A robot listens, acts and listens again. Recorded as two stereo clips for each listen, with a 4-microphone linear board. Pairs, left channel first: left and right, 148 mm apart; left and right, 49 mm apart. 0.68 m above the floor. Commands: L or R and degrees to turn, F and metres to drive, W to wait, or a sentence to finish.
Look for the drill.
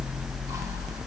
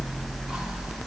W
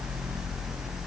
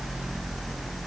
W
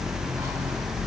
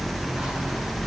I can't make out a drill to turn to.